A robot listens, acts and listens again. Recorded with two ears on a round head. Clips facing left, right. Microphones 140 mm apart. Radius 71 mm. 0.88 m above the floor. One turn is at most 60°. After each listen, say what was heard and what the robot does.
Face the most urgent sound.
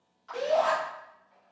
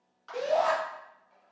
Turn 30° right.
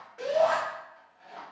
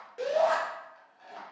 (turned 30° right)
So it is at 140° right. Turn 60° right.
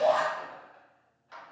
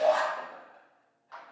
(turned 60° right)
The shout is now 70° right. Turn 60° right.
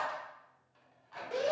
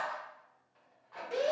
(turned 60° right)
The shout is now 10° right. Turn 10° right.
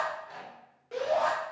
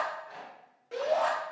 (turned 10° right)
Found it: a shout, straight ahead, 1 to 2 m away.